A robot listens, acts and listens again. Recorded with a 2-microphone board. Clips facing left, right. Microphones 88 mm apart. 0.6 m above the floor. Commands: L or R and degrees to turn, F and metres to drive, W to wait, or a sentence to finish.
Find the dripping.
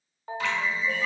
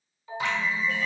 R20
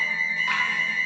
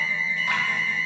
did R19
W
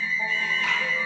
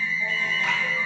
W
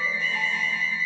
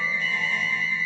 I heard dripping, but can't make it out now. It was about straight ahead or 140° right.